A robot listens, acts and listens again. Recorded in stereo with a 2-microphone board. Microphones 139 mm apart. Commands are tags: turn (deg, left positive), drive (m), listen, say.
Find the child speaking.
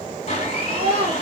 <turn deg="-40"/>
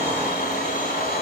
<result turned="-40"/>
<listen/>
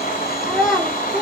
<say>Facing the child speaking.</say>